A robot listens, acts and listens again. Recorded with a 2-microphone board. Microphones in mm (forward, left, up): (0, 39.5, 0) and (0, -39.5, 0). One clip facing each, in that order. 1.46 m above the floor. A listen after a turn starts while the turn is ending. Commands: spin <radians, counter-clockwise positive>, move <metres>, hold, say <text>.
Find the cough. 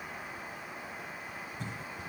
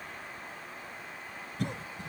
spin -1.22
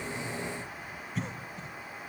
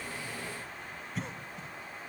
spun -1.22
say Found it: a cough, straight ahead, under 1 m away.